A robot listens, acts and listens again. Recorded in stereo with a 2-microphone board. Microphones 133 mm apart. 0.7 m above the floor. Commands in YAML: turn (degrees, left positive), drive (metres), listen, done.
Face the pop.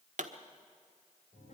turn: -65
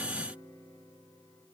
listen: true
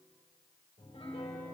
done: "I heard a pop, but can't make it out now. It was about straight ahead or 50° right."